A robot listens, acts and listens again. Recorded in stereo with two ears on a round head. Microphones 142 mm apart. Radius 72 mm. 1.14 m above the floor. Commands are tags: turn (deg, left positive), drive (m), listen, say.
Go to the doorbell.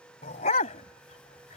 <listen/>
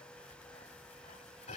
<listen/>
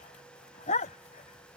<say>I can't make out a doorbell to turn to.</say>